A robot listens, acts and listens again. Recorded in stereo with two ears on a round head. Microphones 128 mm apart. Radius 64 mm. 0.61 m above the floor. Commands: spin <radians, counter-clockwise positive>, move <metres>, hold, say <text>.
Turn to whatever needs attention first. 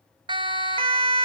spin -0.61
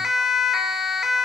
say Facing the siren, 2 to 4 m away.